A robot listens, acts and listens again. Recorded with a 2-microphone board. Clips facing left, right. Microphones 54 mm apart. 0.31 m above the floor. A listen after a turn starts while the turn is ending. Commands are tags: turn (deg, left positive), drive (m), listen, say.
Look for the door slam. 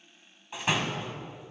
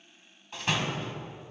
<turn deg="15"/>
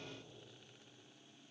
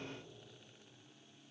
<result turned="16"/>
<listen/>
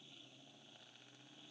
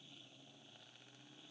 <say>I heard a door slam, but can't make it out now. It was about straight ahead or 150° left.</say>